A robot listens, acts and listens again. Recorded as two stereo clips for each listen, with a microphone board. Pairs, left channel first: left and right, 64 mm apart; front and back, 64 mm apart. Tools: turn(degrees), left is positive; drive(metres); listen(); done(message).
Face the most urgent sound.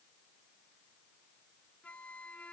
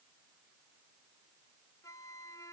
listen()
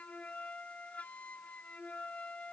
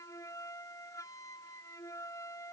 listen()
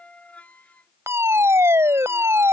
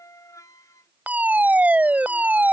turn(degrees=-120)
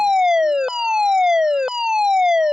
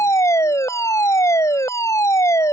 turn(degrees=-10)
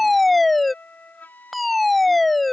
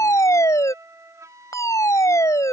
done("Facing the fire alarm.")